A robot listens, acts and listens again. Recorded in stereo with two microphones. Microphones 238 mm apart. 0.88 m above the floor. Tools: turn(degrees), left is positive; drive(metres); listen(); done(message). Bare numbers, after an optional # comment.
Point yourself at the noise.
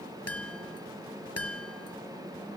turn(90)
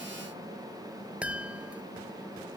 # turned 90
done("Found it: a chime, straight ahead.")